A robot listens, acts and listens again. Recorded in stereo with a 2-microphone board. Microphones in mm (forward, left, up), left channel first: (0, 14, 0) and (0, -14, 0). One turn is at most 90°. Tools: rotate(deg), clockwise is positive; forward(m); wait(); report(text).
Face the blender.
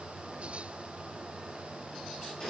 wait()
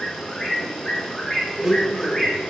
rotate(30)
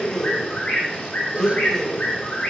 rotate(-20)
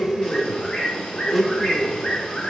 report("Facing the blender.")